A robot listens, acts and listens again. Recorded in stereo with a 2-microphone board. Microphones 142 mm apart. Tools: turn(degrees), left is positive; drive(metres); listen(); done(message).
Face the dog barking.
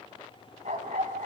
turn(degrees=-65)
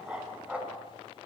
turn(degrees=-10)
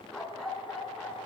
done("Facing the dog barking.")